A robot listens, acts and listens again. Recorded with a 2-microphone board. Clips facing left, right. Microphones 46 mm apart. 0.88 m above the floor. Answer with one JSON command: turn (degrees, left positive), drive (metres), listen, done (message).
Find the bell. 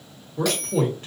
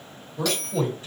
{"turn": 30}
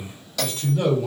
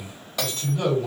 {"turn": -20}
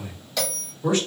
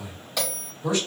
{"done": "Facing the bell."}